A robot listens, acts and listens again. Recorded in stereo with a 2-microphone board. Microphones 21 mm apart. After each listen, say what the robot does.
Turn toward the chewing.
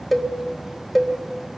Keep listening.
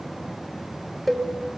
Keep listening.
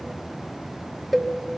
I can't make out chewing to turn to.